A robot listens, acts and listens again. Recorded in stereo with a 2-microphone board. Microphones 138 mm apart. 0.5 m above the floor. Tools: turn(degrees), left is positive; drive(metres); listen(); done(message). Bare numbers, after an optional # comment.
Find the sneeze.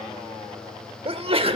# The sneeze: about 45° right or 135° right.
turn(-45)
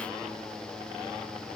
listen()
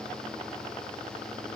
done("I heard a sneeze, but can't make it out now. It was about straight ahead or 90° right.")